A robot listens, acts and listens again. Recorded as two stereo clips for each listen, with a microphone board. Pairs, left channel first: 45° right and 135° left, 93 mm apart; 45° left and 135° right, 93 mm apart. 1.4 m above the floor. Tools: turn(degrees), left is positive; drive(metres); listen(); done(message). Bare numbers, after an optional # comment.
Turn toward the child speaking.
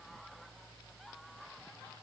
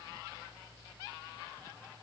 listen()
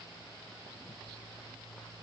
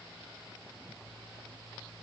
listen()
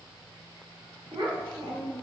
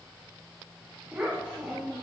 # The child speaking: 145° left.
turn(145)
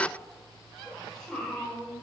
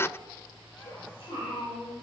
# The child speaking is now 35° left.
turn(35)
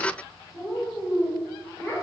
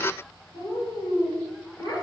# The child speaking is now 10° left.
turn(10)
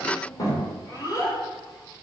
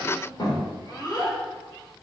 done("Facing the child speaking.")